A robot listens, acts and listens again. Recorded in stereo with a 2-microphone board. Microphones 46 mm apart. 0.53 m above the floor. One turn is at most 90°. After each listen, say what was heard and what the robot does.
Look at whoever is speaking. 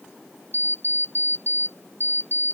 Keep listening.
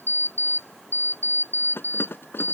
Keep listening.
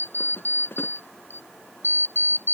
I can't make out anyone speaking to turn to.